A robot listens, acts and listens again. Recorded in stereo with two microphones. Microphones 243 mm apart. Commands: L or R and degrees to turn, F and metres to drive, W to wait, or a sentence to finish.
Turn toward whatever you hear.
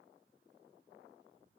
W
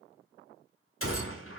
L60
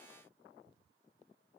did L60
W
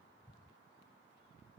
I heard a gunshot, but can't make it out now. It was about straight ahead or 60° left.